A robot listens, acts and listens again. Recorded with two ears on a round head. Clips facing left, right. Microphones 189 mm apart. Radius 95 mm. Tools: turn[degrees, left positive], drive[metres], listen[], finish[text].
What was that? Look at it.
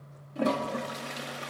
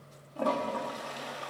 Thought: The toilet flushing: about 25° left or 155° left.
Action: turn[25]
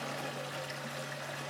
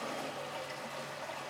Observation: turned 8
Thought: The toilet flushing: about 20° left or 160° left.
Action: turn[20]
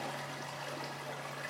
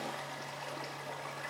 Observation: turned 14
Action: finish[Facing the toilet flushing.]